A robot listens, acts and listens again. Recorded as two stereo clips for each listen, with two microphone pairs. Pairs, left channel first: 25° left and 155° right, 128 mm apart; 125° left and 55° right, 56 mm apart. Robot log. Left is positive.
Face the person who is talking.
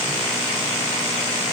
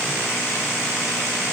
cmd idle
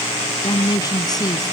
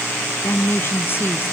note: The woman speaking: 80° left.
cmd yaw +80
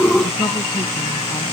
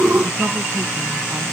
cmd idle
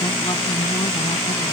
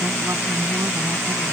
cmd idle
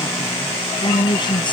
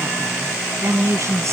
note: The woman speaking is now 25° right.
cmd yaw -25
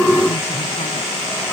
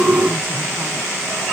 cmd idle
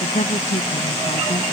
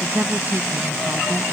end: Found it: a woman speaking, straight ahead.